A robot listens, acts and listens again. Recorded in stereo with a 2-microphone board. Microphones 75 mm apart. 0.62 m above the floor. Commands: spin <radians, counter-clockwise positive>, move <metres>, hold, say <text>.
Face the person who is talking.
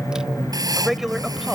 spin -0.52
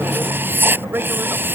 spin -2.53
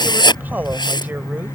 hold
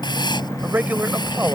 spin -0.44
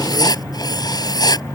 hold
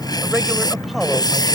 hold
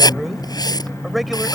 say Facing the man speaking.